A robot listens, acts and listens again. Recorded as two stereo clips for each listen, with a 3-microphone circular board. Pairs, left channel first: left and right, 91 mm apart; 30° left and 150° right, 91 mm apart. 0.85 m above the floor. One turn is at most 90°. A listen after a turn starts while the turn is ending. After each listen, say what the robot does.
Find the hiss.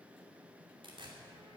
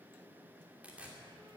Keep listening.
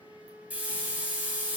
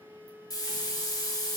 Turn 15° right.
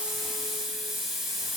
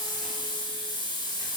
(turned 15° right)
Found it: a hiss, straight ahead.